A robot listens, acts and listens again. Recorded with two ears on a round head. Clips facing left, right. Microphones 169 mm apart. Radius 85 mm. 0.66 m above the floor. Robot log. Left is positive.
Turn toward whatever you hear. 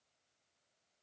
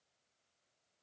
cmd idle
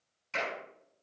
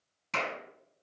note: The clap: about 75° right or 105° right.
cmd yaw -75
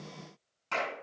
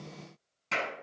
note: So it is at 25° right.
cmd yaw -25
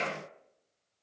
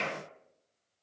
note: The clap is now 10° left.
cmd yaw +10
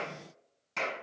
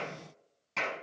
end: Facing the clap, over 4 m away.